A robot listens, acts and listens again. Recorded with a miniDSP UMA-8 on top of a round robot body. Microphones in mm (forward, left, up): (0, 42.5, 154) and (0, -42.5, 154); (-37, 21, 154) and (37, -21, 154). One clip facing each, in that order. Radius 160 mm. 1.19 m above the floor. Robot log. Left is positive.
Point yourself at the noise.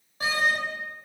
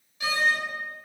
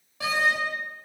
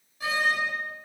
note: The door slam: 145° left.
cmd yaw +145
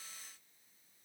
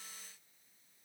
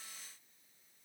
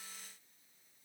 end: I heard a door slam from this way, but can't make it out now.